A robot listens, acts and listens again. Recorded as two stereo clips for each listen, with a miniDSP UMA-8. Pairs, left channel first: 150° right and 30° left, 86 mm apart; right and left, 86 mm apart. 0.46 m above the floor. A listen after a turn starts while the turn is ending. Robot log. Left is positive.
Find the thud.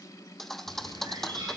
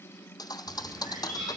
note: The thud: 65° right.
cmd yaw -65
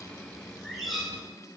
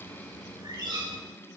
end: Facing where the thud came from. I can't hear it now.